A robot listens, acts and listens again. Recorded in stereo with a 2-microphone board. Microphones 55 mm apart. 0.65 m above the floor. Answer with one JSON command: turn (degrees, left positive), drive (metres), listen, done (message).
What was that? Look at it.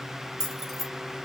{"turn": 30}
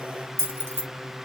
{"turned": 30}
{"turn": -45}
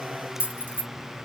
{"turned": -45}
{"turn": -35}
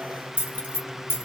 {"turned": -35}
{"turn": -40}
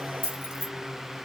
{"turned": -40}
{"turn": -25}
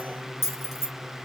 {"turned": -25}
{"done": "Found it: keys jangling, straight ahead."}